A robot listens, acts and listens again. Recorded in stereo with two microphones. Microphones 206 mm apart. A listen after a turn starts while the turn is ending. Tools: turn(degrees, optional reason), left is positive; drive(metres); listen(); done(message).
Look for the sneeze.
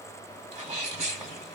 turn(degrees=-20, reason="The sneeze: about 20° right or 160° right.")
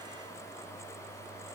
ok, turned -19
listen()
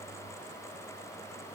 done("I heard a sneeze, but can't make it out now. It was about straight ahead or 140° right.")